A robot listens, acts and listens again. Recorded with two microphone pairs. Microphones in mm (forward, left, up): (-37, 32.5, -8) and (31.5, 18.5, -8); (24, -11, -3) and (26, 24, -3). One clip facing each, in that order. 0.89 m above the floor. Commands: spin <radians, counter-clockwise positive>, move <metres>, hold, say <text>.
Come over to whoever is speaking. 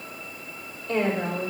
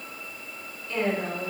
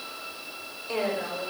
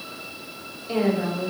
spin 2.79
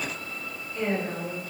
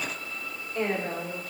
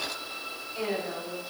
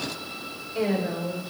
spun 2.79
spin 0.26
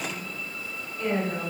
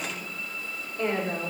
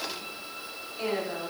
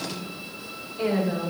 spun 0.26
move 1.0
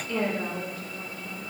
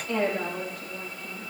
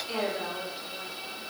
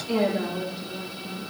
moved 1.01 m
move 1.0
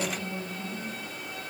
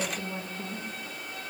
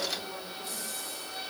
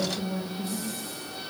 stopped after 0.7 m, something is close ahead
say Arrived at the woman speaking, straight ahead.